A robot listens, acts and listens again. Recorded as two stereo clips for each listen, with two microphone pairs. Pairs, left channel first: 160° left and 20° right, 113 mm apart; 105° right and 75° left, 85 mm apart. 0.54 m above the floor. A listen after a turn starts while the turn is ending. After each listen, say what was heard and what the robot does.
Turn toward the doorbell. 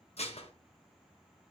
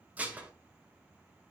Keep listening.
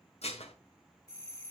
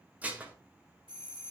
The doorbell: 100° left. Turn 100° left.
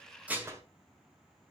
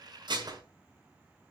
Keep listening.
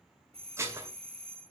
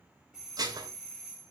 Facing the doorbell, 2 to 4 m away.